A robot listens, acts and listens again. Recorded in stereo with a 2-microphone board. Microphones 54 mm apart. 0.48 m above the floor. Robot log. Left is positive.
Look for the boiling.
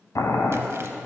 cmd yaw +90
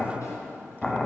note: So it is at 10° left.
cmd yaw +10
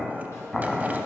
end: Facing the boiling.